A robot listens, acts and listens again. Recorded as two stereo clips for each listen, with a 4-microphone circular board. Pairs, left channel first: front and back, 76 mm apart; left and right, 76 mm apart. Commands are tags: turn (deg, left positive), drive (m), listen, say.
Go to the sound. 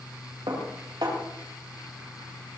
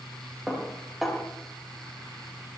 <turn deg="-175"/>
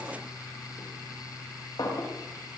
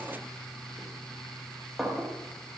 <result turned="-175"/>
<drive m="1.0"/>
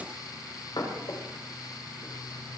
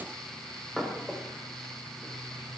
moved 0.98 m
<drive m="1.0"/>
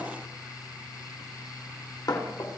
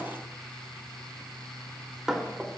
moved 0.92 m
<drive m="1.0"/>
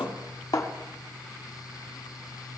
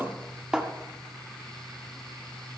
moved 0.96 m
<turn deg="-10"/>
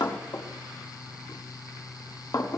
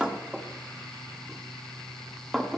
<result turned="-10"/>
<drive m="1.0"/>
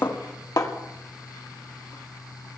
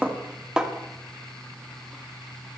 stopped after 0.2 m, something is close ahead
<turn deg="-10"/>
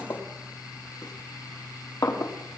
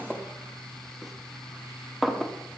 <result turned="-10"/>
<say>Arrived at the dishes clattering, straight ahead.</say>